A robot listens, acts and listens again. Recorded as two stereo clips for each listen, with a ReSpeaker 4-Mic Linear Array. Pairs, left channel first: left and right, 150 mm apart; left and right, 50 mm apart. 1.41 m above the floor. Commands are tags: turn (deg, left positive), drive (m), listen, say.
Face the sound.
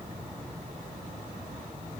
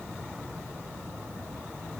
<listen/>
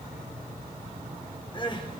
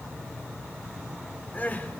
<turn deg="35"/>
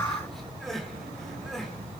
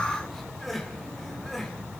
<say>Found it: crying, straight ahead, 2 to 4 m away.</say>